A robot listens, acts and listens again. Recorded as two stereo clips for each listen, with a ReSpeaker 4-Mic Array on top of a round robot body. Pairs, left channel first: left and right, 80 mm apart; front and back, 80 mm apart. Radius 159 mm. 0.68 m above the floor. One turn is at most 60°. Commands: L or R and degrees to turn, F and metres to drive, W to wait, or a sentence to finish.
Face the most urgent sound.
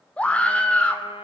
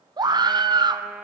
L60
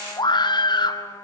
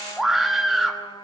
L60
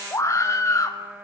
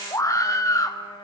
L40
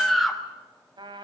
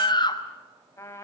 Found it: a scream, straight ahead, 1 to 2 m away.